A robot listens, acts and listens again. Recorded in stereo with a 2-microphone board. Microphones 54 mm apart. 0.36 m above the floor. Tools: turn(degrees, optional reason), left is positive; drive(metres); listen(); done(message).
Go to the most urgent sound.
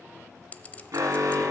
turn(degrees=-70, reason="The alarm: about 70° right or 110° right.")
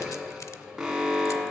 drive(metres=1.0)
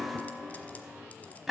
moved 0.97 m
drive(metres=1.0)
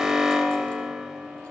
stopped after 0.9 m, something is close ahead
turn(degrees=-10, reason="The alarm is now 10° right.")
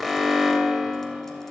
done("I am next to the alarm.")